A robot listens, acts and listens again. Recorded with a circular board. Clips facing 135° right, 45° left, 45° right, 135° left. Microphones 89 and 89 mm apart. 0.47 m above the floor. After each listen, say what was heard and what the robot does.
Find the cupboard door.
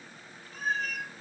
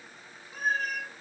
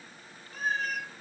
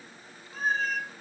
Keep listening.
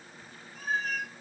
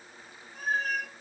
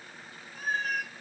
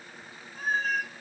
Keep listening.
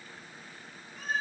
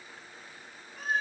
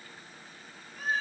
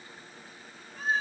I can't make out a cupboard door to turn to.